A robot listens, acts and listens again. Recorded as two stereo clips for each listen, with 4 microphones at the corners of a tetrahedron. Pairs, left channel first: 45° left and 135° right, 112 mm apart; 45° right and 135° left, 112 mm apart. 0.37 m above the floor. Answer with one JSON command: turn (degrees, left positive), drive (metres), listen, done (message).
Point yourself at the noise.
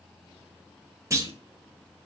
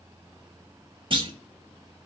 {"turn": 165}
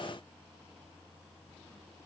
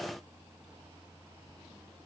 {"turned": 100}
{"turn": 65}
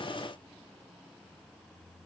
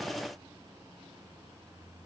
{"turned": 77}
{"turn": -10}
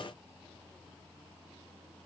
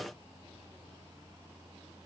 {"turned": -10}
{"done": "I heard a clunk from this way, but can't make it out now."}